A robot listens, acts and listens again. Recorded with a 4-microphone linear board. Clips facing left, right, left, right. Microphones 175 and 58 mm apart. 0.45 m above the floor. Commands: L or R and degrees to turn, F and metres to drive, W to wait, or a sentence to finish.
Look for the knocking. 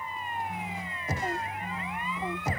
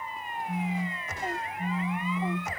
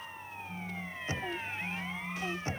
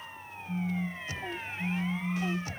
L35
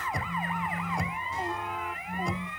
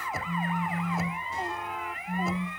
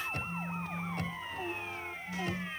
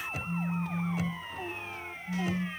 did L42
Facing the knocking.